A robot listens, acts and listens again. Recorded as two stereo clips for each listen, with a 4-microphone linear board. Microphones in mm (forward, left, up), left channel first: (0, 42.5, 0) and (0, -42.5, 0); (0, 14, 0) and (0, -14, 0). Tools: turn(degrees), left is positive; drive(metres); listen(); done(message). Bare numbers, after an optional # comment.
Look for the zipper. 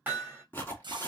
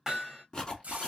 # The zipper: about 25° left or 155° left.
turn(25)
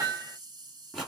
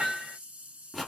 done("Facing the zipper.")